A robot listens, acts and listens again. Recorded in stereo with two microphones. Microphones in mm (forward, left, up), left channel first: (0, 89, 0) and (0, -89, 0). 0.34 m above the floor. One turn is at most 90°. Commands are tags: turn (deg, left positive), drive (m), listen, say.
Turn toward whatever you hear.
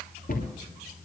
<turn deg="60"/>
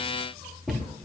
<say>Facing the cupboard door, 2 to 4 m away.</say>